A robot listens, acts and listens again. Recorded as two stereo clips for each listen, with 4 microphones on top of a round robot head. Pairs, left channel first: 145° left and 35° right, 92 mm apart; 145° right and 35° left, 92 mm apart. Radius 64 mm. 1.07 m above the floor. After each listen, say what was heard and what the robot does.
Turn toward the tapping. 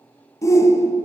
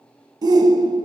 Keep listening.
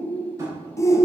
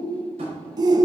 The tapping: 20° left. Turn 20° left.
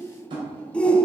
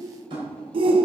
Found it: tapping, straight ahead.